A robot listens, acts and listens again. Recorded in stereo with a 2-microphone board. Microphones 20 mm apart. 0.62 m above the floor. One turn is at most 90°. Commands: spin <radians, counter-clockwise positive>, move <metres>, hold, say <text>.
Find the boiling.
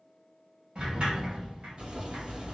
spin -1.57
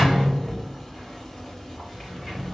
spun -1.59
spin 0.26
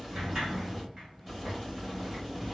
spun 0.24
say Facing the boiling, 1 to 2 m away.